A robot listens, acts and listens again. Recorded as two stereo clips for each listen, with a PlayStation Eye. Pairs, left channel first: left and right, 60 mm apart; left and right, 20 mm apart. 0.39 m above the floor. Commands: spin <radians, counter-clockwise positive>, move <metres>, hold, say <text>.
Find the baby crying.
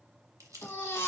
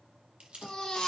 spin 0.79
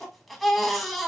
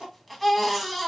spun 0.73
say Found it: a baby crying, straight ahead, under 1 m away.